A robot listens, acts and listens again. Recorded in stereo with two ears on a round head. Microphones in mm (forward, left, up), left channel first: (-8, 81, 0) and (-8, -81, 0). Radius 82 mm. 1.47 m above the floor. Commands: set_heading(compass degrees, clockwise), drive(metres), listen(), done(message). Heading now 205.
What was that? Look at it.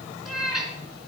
set_heading(175)
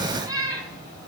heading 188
set_heading(208)
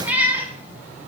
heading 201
set_heading(211)
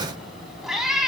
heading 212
done("Facing the cat meowing.")